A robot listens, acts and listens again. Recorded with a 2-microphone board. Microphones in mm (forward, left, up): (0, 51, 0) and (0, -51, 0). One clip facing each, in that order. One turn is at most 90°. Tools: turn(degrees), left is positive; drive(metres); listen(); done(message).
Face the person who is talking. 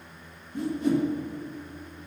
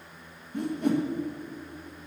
listen()
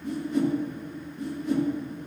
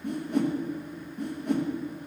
listen()
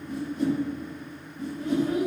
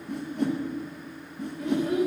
turn(degrees=-90)
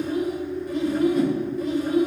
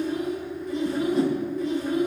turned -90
done("Found it: a child speaking, straight ahead.")